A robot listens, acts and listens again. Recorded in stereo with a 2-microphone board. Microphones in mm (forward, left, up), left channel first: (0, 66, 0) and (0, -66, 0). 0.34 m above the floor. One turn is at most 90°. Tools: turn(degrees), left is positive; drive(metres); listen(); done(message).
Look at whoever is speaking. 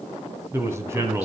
turn(degrees=-20)
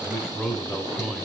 done("Facing the man speaking.")